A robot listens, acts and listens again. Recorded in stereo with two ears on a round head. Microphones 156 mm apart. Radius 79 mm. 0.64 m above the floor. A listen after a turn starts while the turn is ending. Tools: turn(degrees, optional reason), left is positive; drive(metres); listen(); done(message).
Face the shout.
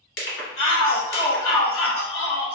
turn(degrees=55, reason="The shout: about 55° left or 125° left.")
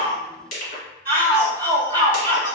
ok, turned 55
turn(degrees=15, reason="So it is at 15° left.")
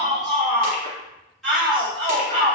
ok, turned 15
done("Found it: a shout, straight ahead, 1 to 2 m away.")